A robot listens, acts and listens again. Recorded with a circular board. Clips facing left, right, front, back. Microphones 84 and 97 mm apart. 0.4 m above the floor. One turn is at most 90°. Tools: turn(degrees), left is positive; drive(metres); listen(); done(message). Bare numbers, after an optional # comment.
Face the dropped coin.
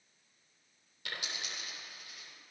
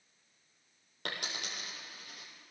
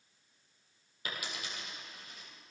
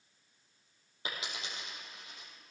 # The dropped coin: 115° right.
turn(-90)
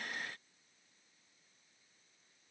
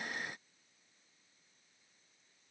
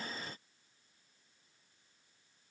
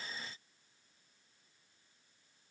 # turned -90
# Nothing new. It was at 25° right.
turn(-25)
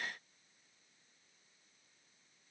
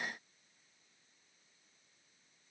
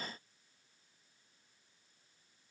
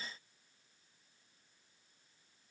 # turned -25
done("I heard a dropped coin from this way, but can't make it out now.")